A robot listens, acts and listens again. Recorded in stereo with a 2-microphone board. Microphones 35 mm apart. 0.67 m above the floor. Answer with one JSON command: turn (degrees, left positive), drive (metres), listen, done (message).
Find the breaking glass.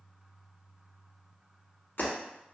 {"turn": 65}
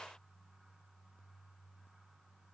{"listen": true}
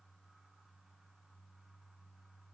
{"done": "I heard breaking glass, but can't make it out now. It was about straight ahead or 50° left."}